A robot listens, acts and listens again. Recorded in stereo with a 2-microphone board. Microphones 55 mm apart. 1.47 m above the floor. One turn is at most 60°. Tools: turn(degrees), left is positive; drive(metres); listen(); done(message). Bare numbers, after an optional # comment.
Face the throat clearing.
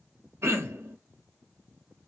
# The throat clearing: about 55° right or 125° right.
turn(-55)
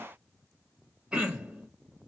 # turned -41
# So it is at 20° right.
turn(-20)
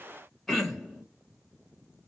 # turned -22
done("Found it: throat clearing, straight ahead.")